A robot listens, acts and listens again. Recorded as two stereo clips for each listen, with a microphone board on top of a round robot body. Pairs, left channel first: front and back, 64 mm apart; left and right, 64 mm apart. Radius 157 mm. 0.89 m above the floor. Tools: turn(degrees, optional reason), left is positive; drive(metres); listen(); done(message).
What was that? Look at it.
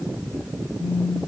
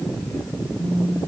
turn(degrees=120, reason="The phone buzzing: 120° left.")
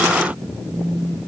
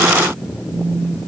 turn(degrees=35, reason="The phone buzzing is now 35° left.")
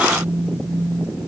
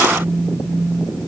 done("Facing the phone buzzing.")